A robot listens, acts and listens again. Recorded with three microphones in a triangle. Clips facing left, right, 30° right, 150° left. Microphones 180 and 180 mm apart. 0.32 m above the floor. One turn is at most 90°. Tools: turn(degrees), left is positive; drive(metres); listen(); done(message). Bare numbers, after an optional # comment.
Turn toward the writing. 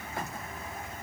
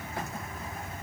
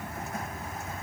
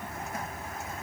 listen()
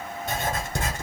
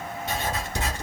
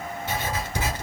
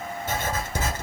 # The writing: 115° left.
turn(90)
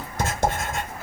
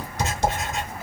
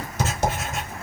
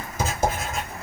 # The writing is now 60° left.
turn(60)
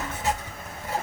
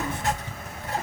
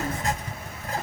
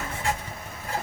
# The writing is now 10° left.
turn(10)
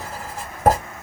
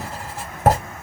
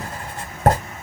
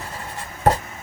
done("Found it: writing, straight ahead, 2 to 4 m away.")